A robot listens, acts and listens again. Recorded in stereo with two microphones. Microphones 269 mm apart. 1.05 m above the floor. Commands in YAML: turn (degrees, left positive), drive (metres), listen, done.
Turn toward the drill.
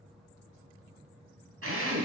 turn: -60
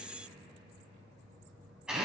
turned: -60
done: "Found it: a drill, straight ahead."